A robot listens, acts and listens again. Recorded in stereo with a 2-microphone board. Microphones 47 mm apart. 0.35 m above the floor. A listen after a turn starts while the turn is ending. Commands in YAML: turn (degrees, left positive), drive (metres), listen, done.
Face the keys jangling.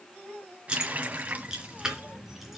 turn: -30
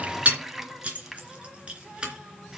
turn: -20
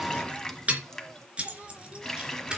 turn: -20
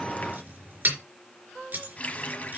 turn: -140
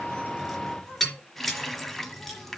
done: "Found it: keys jangling, straight ahead."